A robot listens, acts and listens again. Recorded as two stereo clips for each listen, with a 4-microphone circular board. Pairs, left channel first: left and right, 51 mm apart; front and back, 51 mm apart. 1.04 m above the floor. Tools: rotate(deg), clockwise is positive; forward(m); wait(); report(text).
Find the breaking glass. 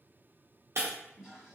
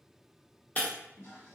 rotate(60)
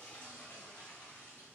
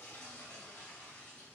report("I heard breaking glass from this way, but can't make it out now.")